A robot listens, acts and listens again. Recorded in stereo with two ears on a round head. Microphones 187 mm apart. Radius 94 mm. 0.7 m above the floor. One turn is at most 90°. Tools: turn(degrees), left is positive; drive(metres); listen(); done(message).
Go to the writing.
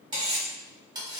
listen()
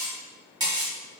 listen()
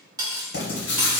turn(degrees=60)
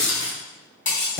turn(degrees=60)
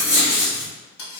drive(metres=1.0)
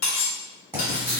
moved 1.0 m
turn(degrees=-10)
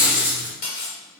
drive(metres=1.0)
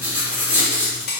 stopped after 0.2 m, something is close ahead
turn(degrees=-10)
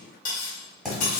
done("I am next to the writing.")